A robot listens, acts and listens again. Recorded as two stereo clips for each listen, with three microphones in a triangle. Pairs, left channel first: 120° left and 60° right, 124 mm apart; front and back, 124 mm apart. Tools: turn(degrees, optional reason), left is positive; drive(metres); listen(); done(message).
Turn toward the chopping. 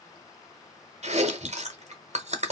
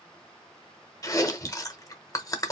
listen()
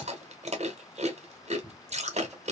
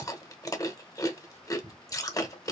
listen()
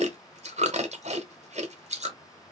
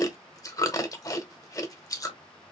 done("I can't make out chopping, only chewing.")